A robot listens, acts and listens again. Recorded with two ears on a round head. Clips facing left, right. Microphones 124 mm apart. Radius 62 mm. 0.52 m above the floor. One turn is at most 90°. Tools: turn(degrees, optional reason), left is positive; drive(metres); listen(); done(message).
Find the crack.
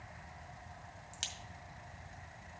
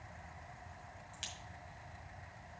turn(degrees=55, reason="The crack: about 55° left or 125° left.")
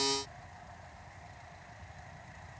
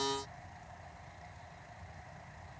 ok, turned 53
listen()
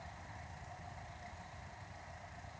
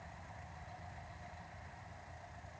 done("I heard a crack, but can't make it out now. It was about straight ahead or 70° left.")